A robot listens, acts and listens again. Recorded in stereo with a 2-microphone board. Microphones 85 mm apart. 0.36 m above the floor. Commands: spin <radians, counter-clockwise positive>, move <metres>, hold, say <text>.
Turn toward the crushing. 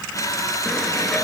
spin 0.70
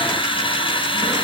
spin 1.75
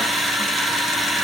say Found it: crushing, straight ahead, over 4 m away.